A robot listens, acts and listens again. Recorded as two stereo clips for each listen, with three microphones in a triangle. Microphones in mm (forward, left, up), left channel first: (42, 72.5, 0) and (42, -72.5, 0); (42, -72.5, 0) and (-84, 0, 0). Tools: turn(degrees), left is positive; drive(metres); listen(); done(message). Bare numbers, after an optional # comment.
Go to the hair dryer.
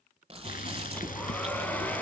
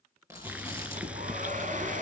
# The hair dryer: 170° left.
turn(170)
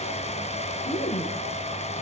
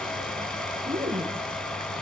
# The hair dryer is now 55° left.
turn(55)
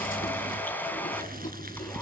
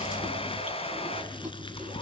# The hair dryer is now 15° left.
turn(15)
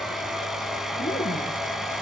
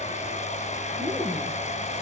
drive(1.0)
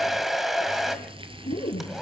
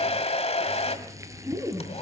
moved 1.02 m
drive(1.0)
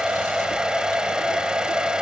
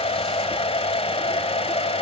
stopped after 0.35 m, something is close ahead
done("I am next to the hair dryer.")